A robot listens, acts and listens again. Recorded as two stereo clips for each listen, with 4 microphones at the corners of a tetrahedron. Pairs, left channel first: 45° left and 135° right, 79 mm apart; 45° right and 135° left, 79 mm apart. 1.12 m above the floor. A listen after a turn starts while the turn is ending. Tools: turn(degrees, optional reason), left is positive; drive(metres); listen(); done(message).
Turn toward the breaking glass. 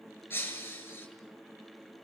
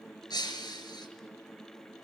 turn(degrees=-20, reason="The breaking glass: 20° right.")
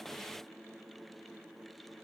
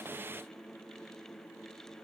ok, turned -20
done("I heard breaking glass from this way, but can't make it out now.")